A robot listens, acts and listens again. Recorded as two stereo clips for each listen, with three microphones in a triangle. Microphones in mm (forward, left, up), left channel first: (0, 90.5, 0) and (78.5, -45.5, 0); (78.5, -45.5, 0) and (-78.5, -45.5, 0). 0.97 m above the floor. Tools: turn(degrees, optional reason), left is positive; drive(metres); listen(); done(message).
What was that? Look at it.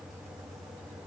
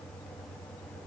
listen()
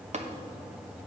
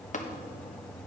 turn(degrees=-25, reason="The tapping: 25° right.")
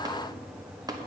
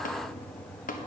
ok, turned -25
done("Found it: tapping, straight ahead.")